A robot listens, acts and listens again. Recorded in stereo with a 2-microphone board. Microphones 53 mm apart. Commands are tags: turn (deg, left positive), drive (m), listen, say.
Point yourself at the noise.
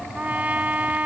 <turn deg="-25"/>
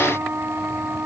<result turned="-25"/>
<turn deg="-125"/>
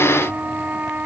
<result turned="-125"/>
<turn deg="-35"/>
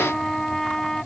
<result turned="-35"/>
<say>Found it: a trumpet, straight ahead.</say>